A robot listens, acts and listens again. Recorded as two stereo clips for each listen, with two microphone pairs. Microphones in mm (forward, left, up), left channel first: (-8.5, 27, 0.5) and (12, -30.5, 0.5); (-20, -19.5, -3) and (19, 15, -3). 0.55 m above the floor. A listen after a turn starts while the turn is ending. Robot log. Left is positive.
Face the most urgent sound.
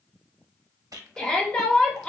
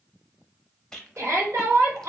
note: The shout: 40° left.
cmd yaw +40
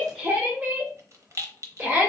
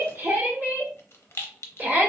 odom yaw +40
end: Found it: a shout, straight ahead.